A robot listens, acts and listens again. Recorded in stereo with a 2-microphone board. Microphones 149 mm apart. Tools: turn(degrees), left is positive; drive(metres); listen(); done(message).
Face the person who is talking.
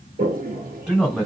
turn(degrees=-30)
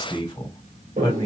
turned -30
turn(degrees=25)
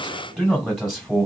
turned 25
done("Facing the man speaking.")